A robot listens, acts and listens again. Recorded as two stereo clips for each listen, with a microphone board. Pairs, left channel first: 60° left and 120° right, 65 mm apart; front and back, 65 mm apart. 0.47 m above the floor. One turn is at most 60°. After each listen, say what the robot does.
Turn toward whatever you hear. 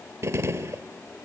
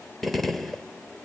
Turn 60° right.
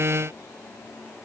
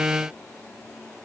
Turn 30° right.
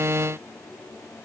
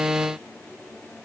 Facing where the gunshot came from. I can't hear it now.